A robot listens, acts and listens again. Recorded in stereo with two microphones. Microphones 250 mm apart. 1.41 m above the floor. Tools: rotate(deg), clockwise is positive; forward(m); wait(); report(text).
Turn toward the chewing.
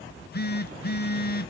wait()
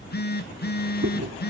rotate(90)
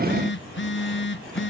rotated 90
wait()
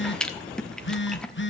report("Facing the chewing, 1 to 2 m away.")